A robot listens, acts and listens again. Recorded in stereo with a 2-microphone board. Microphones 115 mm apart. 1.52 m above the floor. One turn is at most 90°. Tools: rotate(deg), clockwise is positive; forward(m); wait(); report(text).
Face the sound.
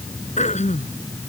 rotate(-90)
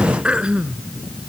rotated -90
rotate(10)
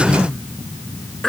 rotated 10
report("Found it: throat clearing, straight ahead.")